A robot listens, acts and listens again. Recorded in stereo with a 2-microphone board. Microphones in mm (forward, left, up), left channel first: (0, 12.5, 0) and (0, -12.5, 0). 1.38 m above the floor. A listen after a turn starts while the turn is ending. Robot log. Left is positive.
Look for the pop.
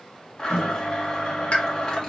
note: The pop: about 70° left or 110° left.
cmd yaw +70
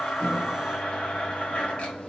cmd idle
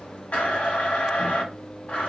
end: I heard a pop, but can't make it out now. It was about straight ahead or 40° left.